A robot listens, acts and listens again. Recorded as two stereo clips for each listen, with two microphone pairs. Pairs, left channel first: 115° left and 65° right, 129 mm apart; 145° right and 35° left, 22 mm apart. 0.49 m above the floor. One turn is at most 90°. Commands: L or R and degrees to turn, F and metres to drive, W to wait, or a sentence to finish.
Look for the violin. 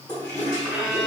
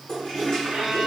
L20
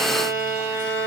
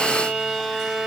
Facing the violin.